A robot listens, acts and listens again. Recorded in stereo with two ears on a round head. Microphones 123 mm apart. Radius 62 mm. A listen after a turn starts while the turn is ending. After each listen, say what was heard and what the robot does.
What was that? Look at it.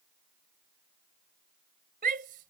The shout: about 65° right or 115° right. Turn 65° right.
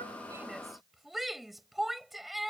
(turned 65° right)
Found it: a shout, straight ahead.